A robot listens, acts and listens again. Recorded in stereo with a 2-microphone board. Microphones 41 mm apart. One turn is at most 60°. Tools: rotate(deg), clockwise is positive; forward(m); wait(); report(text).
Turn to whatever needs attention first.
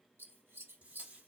wait()
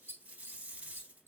wait()
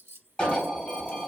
rotate(-15)
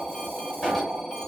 report("Found it: an alarm, straight ahead.")